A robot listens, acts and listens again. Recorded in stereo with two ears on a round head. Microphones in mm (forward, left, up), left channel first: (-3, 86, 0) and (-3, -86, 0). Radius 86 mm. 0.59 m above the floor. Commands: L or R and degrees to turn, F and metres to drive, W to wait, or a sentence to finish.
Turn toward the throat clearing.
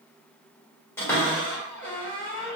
W
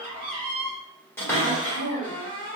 L65
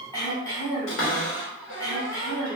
L20
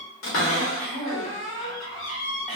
Facing the throat clearing, 1 to 2 m away.